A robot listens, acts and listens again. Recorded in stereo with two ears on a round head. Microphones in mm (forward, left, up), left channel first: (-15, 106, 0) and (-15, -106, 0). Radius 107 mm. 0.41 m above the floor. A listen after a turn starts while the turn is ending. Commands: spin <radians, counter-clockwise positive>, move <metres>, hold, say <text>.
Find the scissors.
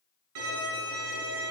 hold
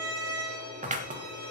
spin -0.52
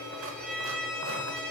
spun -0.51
hold
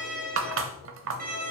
spin -2.09
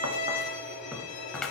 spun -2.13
say Facing the scissors.